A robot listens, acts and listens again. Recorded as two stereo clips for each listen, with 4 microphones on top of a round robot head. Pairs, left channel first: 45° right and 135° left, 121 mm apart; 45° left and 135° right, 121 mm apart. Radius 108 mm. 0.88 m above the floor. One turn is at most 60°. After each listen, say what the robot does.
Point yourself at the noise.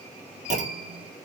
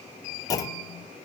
Turn 60° left.
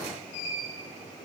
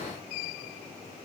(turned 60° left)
Turn 50° left.
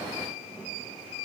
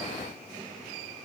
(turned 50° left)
I heard a clunk from this way, but can't make it out now.